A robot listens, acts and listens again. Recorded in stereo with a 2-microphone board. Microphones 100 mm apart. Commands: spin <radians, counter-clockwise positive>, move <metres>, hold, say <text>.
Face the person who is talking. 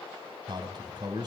spin -0.79
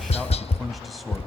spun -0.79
say Found it: a man speaking, straight ahead, over 4 m away.